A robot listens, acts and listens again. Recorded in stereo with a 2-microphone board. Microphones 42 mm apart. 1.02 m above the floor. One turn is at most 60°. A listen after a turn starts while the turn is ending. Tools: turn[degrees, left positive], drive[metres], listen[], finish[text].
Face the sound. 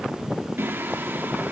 Thought: The singing: about 60° right or 120° right.
Action: turn[-60]
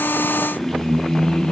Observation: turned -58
Thought: So it is at 20° left.
Action: turn[20]
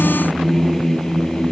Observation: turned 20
Thought: The singing is now 20° left.
Action: turn[20]
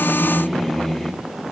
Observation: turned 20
Thought: The singing is now 10° left.
Action: turn[10]
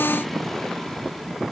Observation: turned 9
Action: listen[]
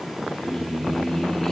Thought: The singing is now 10° left.
Action: turn[10]
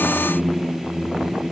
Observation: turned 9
Action: finish[Facing the singing.]